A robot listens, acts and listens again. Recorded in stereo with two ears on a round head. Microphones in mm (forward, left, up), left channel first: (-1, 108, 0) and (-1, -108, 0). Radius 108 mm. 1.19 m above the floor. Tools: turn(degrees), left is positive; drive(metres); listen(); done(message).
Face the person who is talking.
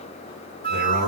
turn(degrees=90)
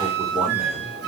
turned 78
turn(degrees=10)
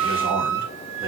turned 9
turn(degrees=-10)
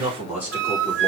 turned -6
turn(degrees=-10)
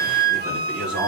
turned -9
done("Facing the man speaking.")